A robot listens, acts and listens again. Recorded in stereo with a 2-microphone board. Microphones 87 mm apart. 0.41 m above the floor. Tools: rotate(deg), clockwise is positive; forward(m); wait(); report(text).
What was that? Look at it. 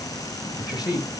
rotate(-45)
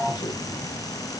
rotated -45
wait()
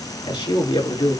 rotate(-80)
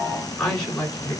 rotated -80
rotate(-15)
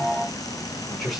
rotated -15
report("Facing the man speaking, over 4 m away.")